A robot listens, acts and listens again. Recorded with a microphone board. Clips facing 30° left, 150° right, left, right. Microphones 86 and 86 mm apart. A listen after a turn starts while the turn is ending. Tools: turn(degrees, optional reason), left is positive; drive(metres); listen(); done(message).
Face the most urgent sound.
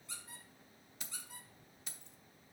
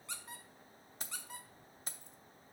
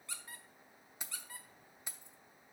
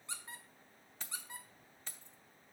listen()
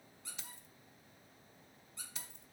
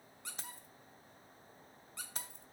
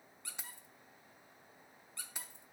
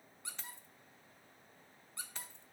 listen()
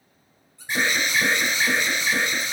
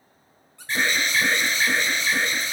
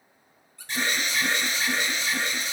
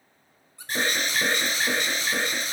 turn(degrees=-45, reason="The alarm: 45° right.")
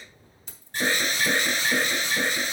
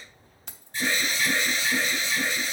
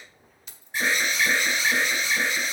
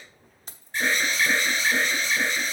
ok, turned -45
turn(degrees=10, reason="The alarm is now 10° left.")
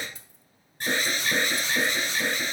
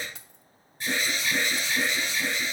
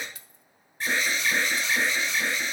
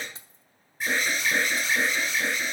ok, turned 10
done("Found it: an alarm, straight ahead, 2 to 4 m away.")